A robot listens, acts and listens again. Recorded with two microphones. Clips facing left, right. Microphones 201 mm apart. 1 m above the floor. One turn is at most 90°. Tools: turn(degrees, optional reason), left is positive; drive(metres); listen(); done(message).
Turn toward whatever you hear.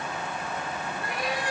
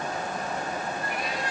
turn(degrees=90)
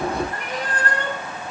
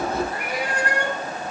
turn(degrees=-15, reason="So it is at 15° right.")
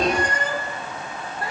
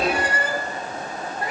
turn(degrees=-20, reason="The cat meowing is now 20° right.")
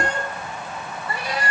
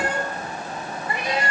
turn(degrees=-25, reason="The cat meowing is now 25° right.")
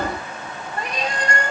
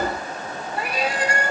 done("Facing the cat meowing, 1 to 2 m away.")